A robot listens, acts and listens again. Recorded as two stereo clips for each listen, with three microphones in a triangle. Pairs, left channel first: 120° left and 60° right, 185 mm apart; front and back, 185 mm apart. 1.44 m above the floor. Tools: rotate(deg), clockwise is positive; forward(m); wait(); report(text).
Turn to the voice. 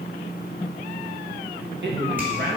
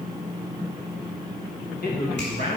rotate(30)
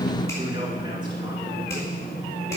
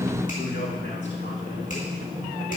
report("Found it: a man speaking, straight ahead, 2 to 4 m away.")